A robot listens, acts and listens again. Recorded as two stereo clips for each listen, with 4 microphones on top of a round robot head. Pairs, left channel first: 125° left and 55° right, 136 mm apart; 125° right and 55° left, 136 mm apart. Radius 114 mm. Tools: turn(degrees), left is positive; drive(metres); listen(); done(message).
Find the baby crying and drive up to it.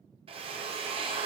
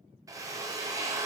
listen()
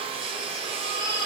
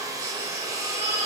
turn(degrees=100)
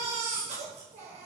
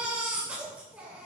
turn(degrees=-25)
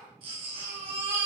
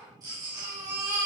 drive(metres=1.0)
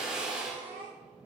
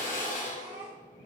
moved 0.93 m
drive(metres=1.0)
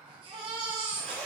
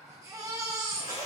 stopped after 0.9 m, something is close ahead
turn(degrees=-10)
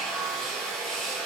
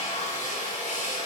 listen()
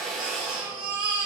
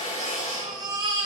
done("Arrived at the baby crying, straight ahead.")